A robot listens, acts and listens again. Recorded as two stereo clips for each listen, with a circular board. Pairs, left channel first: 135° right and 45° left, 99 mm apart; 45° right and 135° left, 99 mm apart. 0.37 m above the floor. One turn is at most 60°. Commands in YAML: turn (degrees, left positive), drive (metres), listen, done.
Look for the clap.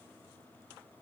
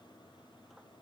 listen: true
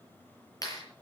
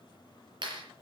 turn: 60
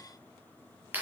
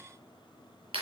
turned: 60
turn: 60
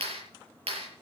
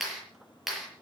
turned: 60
turn: 50
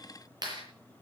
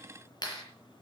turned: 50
done: "Found it: a clap, straight ahead, over 4 m away."